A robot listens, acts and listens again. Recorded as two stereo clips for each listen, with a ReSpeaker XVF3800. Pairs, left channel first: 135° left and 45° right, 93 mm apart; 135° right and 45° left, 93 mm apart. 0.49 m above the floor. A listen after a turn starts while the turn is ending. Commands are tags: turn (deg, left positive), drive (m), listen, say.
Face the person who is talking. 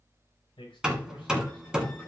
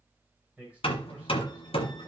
<turn deg="120"/>
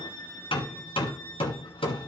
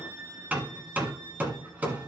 <listen/>
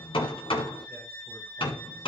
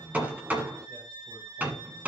<listen/>
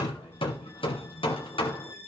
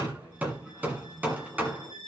<say>Facing where the man speaking came from. I can't hear it now.</say>